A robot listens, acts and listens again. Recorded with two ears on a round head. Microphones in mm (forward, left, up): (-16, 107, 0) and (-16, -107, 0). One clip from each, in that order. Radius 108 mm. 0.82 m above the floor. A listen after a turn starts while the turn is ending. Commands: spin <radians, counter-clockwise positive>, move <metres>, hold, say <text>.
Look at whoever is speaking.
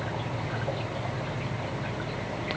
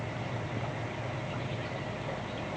hold
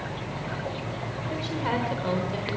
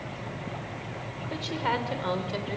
spin -0.52
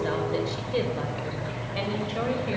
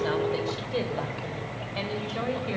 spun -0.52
spin -0.17
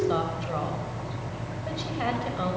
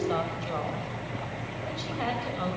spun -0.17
say Found it: a woman speaking, straight ahead, 2 to 4 m away.